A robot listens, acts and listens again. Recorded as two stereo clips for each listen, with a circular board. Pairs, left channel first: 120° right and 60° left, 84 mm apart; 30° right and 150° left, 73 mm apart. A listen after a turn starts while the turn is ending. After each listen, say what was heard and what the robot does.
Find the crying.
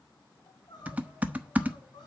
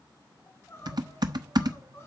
The crying: 90° right. Turn 90° right.
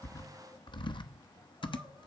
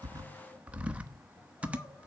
Keep listening.
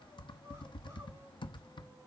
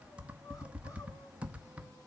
Keep listening.
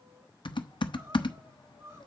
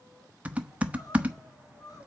Facing the crying, over 4 m away.